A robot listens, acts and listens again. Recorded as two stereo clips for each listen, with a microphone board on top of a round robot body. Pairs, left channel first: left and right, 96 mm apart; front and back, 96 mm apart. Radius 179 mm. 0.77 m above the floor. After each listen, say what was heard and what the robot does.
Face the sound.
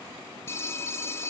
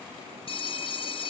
The phone ringing: 25° left. Turn 25° left.
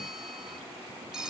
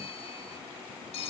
Found it: a phone ringing, straight ahead.